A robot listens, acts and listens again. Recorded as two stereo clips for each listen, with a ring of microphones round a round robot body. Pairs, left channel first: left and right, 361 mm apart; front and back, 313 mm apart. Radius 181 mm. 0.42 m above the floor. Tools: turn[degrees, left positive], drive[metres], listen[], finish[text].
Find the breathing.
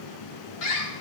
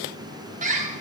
Action: listen[]
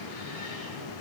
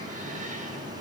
Action: listen[]
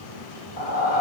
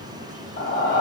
Thought: The breathing: 60° left.
Action: turn[60]
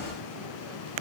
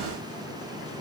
Action: listen[]
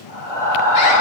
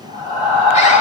Action: finish[Found it: breathing, straight ahead, over 4 m away.]